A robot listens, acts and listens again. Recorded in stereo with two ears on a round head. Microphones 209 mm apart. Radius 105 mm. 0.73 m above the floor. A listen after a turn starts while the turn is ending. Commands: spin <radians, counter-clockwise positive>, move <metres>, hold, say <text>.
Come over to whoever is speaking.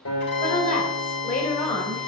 spin 0.70
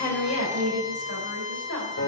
spin 1.75
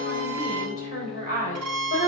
spin 0.70
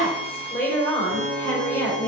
spin 0.17
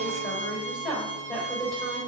move 1.0
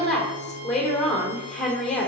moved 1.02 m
move 1.0
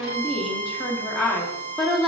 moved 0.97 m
move 1.0
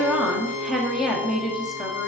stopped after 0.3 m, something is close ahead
say I am next to the woman speaking.